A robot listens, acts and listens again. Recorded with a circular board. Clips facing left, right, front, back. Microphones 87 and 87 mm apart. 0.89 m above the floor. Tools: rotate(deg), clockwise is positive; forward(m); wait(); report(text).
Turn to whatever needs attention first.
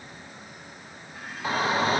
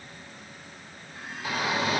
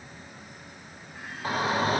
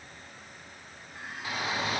rotate(-40)
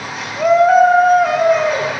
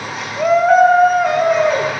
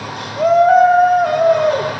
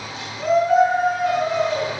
report("Found it: a shout, straight ahead.")